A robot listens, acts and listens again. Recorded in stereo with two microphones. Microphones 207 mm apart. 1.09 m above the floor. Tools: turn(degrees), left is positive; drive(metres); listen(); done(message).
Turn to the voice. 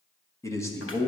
turn(degrees=30)
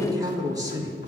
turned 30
turn(degrees=-15)
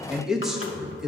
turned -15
done("Facing the man speaking.")